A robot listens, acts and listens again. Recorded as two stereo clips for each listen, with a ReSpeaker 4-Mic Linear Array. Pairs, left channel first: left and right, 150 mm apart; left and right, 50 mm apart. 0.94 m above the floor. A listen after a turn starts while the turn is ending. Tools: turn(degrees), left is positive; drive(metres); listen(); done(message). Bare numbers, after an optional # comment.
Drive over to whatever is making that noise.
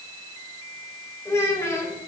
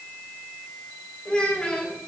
# The child speaking: about 20° left or 160° left.
turn(20)
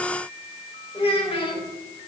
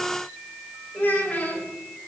# So it is at 145° left.
turn(145)
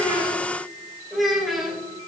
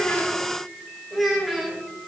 drive(1.0)
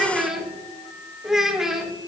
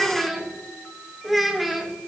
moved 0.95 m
drive(1.0)
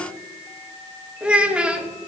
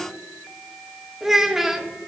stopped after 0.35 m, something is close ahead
done("Arrived at the child speaking, straight ahead.")